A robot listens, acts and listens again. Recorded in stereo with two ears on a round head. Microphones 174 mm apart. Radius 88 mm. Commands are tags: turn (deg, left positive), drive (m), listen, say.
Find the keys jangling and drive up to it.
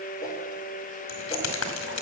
<turn deg="90"/>
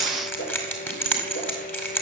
<turn deg="10"/>
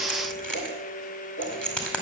<drive m="1.0"/>
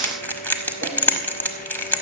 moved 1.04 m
<turn deg="10"/>
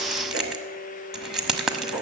<drive m="1.0"/>
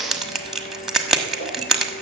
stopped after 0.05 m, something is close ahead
<say>I am next to the keys jangling.</say>